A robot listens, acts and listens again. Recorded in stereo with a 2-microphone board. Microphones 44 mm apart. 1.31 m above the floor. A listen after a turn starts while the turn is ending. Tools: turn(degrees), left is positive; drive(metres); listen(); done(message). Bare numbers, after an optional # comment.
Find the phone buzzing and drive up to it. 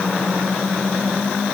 listen()
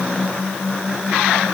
listen()
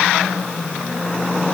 done("I can't make out a phone buzzing to turn to.")